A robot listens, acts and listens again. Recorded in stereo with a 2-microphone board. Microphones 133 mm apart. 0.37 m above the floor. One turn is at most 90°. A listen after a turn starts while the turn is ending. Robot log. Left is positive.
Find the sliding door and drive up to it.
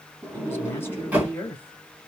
cmd yaw -30
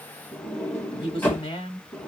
note: So it is at 15° left.
cmd yaw +15
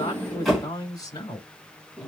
cmd fwd 1.0
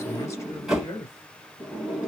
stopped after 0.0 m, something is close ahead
end: Something is in my way. I am facing the sliding door but have not reached it.